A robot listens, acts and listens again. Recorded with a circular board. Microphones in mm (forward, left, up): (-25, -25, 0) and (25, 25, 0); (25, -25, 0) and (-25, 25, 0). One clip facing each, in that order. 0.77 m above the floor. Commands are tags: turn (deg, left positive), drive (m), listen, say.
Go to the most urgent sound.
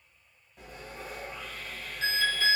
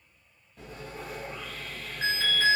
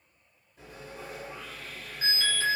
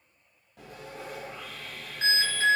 <turn deg="80"/>
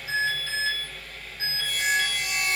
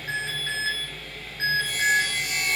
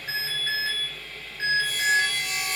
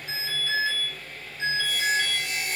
<drive m="1.0"/>
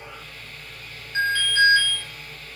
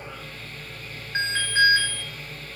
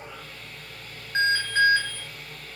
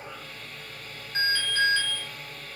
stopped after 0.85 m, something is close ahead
<say>I am next to the alarm.</say>